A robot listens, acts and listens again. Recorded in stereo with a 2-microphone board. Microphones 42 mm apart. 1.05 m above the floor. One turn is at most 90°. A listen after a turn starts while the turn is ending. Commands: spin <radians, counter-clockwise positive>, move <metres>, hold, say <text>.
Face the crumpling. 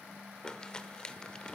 spin 0.26
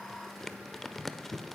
say Found it: crumpling, straight ahead, 1 to 2 m away.